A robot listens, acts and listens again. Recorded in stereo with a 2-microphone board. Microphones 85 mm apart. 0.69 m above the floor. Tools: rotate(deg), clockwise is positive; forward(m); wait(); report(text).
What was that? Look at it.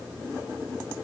wait()
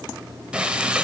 rotate(30)
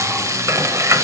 rotate(140)
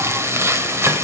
rotate(35)
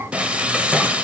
rotate(15)
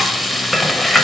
report("Found it: frying, straight ahead.")